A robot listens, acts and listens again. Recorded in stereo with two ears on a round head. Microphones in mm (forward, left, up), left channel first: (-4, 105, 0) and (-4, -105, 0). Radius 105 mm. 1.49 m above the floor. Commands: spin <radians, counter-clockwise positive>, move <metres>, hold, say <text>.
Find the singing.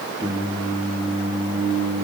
spin -0.35
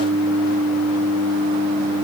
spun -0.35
spin -2.36
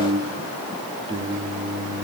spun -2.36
spin -0.35
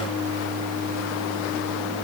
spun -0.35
say Found it: singing, straight ahead, over 4 m away.